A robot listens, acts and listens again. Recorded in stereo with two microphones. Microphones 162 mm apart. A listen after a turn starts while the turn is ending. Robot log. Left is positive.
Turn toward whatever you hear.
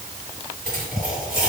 note: The dropped coin: about 70° right or 110° right.
cmd yaw -70
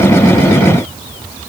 cmd idle
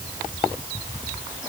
end: I heard a dropped coin, but can't make it out now. It was about straight ahead or 40° right.